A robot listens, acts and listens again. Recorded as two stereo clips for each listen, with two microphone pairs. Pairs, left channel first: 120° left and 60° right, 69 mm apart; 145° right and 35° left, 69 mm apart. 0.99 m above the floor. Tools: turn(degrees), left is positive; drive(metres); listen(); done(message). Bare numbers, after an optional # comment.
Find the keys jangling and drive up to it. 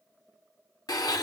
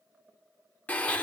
listen()
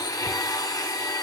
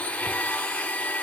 listen()
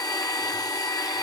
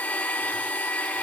done("I can't make out keys jangling, only a blender.")